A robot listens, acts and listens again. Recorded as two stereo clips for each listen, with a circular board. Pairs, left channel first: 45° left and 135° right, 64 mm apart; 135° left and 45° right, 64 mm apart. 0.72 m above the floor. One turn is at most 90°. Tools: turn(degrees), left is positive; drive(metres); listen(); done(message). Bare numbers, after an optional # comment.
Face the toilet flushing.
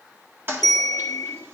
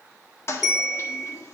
# The toilet flushing: 175° left.
turn(90)
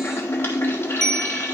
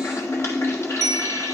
# The toilet flushing is now 95° left.
turn(90)
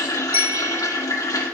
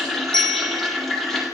# The toilet flushing is now 50° left.
turn(50)
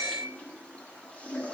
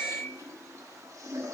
# The toilet flushing is now 25° right.
turn(-25)
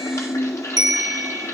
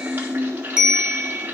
# The toilet flushing is now 10° left.
turn(10)
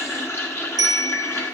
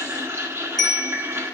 done("Facing the toilet flushing, 1 to 2 m away.")